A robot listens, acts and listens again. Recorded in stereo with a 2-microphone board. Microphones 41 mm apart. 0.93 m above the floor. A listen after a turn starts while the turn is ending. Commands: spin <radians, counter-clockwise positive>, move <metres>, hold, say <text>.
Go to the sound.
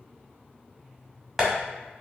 spin -0.52
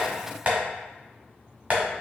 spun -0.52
spin -2.44
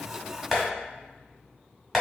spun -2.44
move 1.0
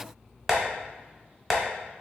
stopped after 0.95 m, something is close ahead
say I am next to the tapping.